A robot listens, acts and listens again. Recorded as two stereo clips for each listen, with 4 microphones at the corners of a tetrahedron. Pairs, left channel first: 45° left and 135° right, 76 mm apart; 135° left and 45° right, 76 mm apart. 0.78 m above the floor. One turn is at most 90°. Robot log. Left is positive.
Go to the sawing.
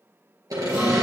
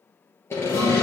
note: The sawing: 170° right.
cmd yaw -90
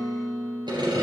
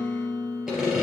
note: The sawing is now 130° right.
cmd yaw -90
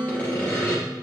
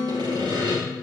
note: The sawing is now 25° right.
cmd yaw -25
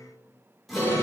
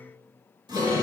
cmd idle
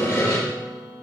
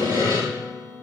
note: The sawing is now 10° right.
cmd yaw -10
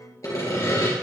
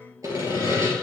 cmd fwd 1.0
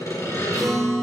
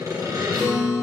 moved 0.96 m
cmd fwd 1.0
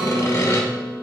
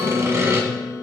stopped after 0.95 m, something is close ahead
end: Arrived at the sawing, straight ahead.